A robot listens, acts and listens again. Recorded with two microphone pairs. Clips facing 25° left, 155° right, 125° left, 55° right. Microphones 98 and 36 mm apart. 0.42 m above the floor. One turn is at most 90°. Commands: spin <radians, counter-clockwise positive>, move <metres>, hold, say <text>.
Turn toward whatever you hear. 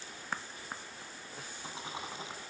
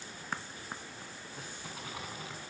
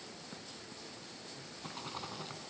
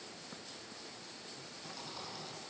spin 1.57
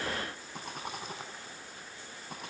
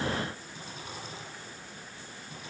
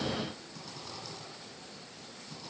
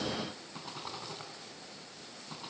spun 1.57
say Found it: a rattle, straight ahead.